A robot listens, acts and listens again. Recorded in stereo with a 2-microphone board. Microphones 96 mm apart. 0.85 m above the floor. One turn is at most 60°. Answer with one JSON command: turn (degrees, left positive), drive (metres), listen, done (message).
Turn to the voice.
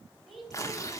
{"turn": 30}
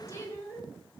{"turn": 60}
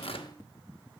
{"turn": 60}
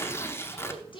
{"turn": 60}
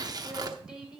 {"turn": -10}
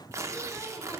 {"listen": true}
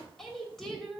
{"done": "Found it: a woman speaking, straight ahead."}